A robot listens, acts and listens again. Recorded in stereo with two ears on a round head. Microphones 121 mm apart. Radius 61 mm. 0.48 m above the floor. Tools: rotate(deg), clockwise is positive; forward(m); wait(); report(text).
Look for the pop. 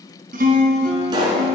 rotate(35)
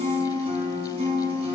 wait()
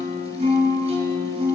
report("I heard a pop, but can't make it out now. It was about straight ahead or 110° right.")